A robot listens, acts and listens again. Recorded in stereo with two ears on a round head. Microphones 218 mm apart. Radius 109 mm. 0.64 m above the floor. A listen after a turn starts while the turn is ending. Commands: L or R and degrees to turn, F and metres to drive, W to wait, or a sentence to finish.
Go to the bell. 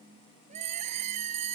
R65
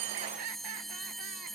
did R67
F1.0
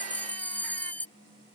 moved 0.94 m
F1.0
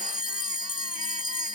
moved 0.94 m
L20
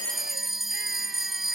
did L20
F1.0
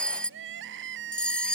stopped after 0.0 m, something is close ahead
Arrived at the bell, straight ahead.